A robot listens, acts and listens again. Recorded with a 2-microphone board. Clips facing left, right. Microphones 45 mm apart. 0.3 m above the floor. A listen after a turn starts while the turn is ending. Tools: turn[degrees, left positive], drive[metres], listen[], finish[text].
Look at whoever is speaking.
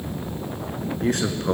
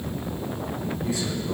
Thought: The man speaking: about 60° left or 120° left.
Action: turn[60]
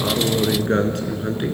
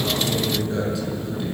Thought: So it is at 55° left.
Action: turn[55]
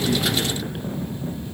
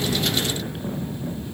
Action: listen[]
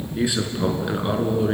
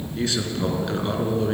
Thought: The man speaking is now 15° left.
Action: turn[15]
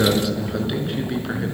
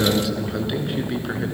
Action: finish[Found it: a man speaking, straight ahead, 2 to 4 m away.]